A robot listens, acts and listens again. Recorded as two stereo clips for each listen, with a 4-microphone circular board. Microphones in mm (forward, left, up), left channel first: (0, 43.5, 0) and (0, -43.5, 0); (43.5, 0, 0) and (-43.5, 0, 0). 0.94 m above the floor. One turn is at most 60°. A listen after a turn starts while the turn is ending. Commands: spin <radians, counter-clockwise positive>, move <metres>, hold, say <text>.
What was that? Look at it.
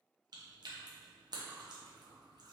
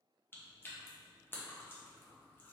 spin -1.05
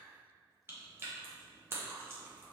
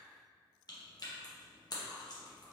spin -0.61
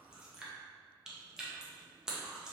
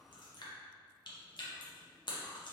spin -0.17
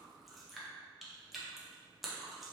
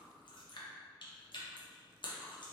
say Found it: chewing, straight ahead, under 1 m away.